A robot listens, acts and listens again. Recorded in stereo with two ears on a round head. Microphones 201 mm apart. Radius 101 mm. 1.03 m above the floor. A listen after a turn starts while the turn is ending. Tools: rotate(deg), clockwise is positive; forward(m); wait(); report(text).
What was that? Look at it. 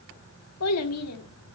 rotate(-90)
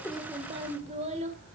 rotate(30)
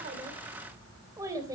rotate(15)
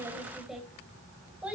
report("Found it: a child speaking, straight ahead, 2 to 4 m away.")